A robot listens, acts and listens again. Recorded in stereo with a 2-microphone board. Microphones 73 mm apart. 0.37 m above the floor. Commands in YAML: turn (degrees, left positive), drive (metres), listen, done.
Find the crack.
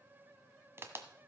turn: -30
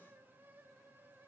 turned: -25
listen: true
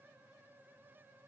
done: "I heard a crack, but can't make it out now. It was about 5° right or 125° right."